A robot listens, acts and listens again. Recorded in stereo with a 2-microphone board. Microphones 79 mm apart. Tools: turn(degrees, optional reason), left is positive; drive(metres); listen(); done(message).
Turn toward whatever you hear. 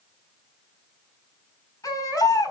turn(degrees=50, reason="The baby crying: about 50° left or 130° left.")
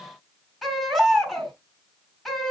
done("Facing the baby crying.")